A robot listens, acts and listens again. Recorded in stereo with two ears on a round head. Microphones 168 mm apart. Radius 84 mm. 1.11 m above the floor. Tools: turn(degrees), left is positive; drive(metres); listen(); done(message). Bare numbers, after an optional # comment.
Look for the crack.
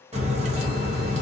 # The crack: about 35° right or 145° right.
turn(-35)
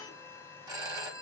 listen()
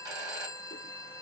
done("I heard a crack, but can't make it out now. It was about straight ahead or 110° right.")